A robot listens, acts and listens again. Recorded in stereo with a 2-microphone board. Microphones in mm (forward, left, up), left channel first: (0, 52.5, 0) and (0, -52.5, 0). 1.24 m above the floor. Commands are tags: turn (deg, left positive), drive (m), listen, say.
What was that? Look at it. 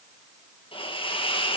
<turn deg="55"/>
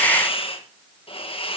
<turn deg="65"/>
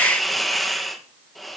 <say>Found it: a hiss, straight ahead, 1 to 2 m away.</say>